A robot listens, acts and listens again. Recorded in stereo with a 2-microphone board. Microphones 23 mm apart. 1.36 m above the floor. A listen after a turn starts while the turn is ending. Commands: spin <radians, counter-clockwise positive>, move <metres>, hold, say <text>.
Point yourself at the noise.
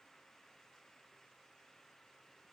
hold
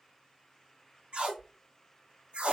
spin -1.13
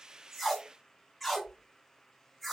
say Facing the tape being pulled.